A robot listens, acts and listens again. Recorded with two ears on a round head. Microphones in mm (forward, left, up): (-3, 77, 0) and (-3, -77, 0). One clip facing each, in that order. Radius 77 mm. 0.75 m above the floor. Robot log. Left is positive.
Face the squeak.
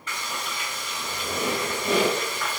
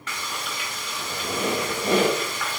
note: The squeak: about 30° right or 150° right.
cmd yaw -30
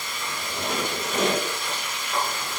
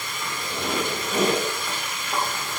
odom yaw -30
end: Found it: a squeak, straight ahead, 1 to 2 m away.